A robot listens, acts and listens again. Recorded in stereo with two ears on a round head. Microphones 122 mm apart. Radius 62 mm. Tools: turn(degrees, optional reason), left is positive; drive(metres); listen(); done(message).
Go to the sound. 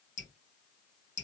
turn(degrees=60, reason="The dripping: about 60° left or 120° left.")
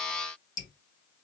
turn(degrees=60, reason="So it is at 60° left.")
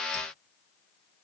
listen()
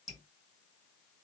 drive(metres=1.0)
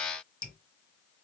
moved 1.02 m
drive(metres=1.0)
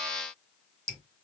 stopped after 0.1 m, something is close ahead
done("Arrived at the dripping, straight ahead.")